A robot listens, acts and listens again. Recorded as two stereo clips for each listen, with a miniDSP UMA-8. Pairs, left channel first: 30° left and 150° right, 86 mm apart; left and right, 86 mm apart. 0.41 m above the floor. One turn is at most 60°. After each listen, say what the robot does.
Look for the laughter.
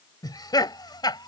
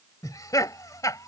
Turn 50° left.
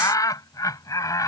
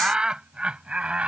Turn 15° right.
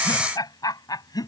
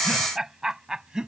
Turn 10° right.
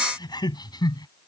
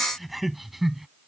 Found it: laughter, straight ahead.